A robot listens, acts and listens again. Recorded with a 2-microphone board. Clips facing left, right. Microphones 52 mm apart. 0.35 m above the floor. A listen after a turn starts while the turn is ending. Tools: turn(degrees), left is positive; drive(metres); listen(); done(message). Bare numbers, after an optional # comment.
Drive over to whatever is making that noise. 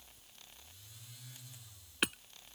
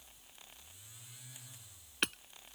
turn(30)
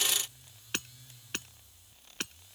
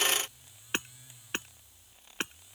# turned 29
# So it is at 25° right.
turn(-25)
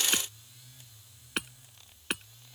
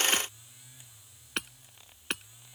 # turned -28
drive(1.0)
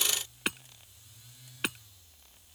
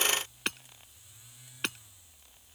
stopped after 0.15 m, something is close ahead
done("Blocked. The hammering is further on, straight ahead.")